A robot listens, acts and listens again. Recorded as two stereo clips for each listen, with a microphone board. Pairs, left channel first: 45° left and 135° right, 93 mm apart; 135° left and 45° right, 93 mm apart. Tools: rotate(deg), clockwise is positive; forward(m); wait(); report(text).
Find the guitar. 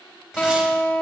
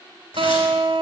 rotate(35)
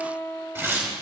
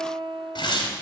rotate(15)
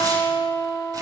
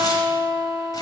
report("Facing the guitar.")